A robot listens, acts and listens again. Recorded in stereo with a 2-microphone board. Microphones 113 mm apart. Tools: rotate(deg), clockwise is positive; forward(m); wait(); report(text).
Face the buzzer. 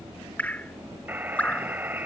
rotate(15)
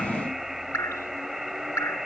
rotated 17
report("Facing the buzzer.")